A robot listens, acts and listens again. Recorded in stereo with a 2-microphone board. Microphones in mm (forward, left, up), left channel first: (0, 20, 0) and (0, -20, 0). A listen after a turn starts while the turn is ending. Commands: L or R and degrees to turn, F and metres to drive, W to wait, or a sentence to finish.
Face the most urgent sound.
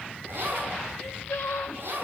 L75
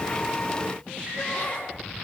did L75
W
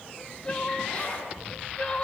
L25
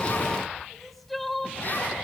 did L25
Found it: crying, straight ahead.